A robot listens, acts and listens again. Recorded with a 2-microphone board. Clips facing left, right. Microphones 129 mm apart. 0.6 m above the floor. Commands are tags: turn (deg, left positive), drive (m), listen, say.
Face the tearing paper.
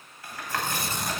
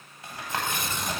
<turn deg="40"/>
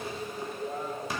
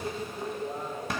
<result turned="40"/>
<listen/>
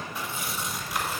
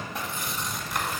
<say>Facing the tearing paper, 1 to 2 m away.</say>